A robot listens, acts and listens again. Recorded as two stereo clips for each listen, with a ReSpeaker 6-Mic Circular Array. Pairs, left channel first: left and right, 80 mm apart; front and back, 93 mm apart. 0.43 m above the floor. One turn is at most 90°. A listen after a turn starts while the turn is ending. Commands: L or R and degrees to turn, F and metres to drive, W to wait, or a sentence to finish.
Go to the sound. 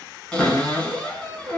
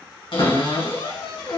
L10
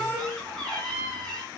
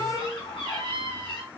F1.0
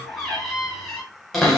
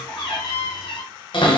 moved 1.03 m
F1.0
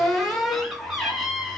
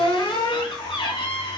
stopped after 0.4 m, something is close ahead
I am next to the cupboard door.